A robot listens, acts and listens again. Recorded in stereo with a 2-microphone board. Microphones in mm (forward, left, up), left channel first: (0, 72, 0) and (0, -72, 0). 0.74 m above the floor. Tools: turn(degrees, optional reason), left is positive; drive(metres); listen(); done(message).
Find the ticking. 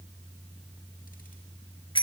listen()
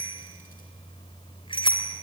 listen()
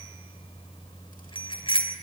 done("I can't make out ticking, only a bicycle bell.")